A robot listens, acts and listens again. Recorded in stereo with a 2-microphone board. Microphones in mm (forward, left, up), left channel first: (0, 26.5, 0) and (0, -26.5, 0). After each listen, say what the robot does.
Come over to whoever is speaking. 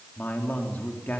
Turn 30° left.
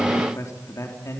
Turn 120° left.
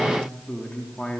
Turn 20° left.
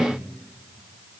Drive 1.0 m forward.
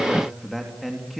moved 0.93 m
Drive 1.0 m forward.
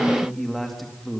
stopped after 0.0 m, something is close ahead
Something is in my way. I am facing the man speaking but have not reached it.